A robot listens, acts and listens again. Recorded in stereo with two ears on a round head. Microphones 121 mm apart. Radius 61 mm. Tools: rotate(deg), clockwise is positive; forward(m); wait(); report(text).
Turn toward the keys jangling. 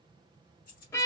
rotate(-90)
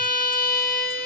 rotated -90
wait()
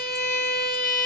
wait()
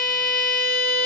report("Facing where the keys jangling came from. I can't hear it now.")